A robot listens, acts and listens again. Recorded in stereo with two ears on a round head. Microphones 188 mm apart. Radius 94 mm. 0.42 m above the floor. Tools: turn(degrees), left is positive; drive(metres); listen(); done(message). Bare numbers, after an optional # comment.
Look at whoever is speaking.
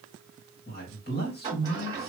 # The man speaking: about 50° left or 130° left.
turn(50)
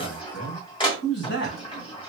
# So it is at 65° left.
turn(65)
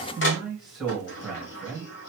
done("Found it: a man speaking, straight ahead, 1 to 2 m away.")